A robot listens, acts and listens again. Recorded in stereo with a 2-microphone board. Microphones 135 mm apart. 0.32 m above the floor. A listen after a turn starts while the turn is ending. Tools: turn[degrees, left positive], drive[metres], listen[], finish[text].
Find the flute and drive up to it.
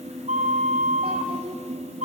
Thought: The flute: about 65° right or 115° right.
Action: turn[-65]
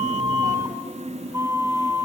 Thought: So it is at 25° right.
Action: turn[-25]
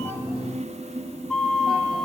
Action: drive[1.0]
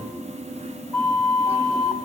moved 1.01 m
Action: drive[1.0]
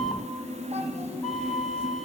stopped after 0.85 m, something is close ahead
Action: finish[I am next to the flute.]